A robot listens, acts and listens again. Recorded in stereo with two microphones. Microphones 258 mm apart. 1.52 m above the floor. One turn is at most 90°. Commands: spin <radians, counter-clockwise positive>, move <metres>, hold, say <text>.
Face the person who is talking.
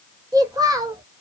spin -0.52
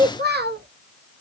spin -1.57
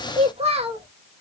spin -0.44
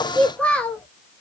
say Facing the child speaking, under 1 m away.